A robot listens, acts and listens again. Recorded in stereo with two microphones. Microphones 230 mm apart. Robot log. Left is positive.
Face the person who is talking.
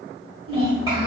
note: The child speaking: about 20° right or 160° right.
cmd yaw -20
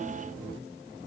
cmd idle
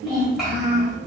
end: Facing the child speaking.